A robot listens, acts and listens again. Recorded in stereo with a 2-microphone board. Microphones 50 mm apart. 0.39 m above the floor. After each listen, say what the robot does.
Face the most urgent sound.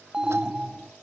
Turn 15° right.
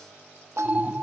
Turn 150° right.
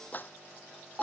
Turn 10° right.
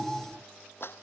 Facing the alarm.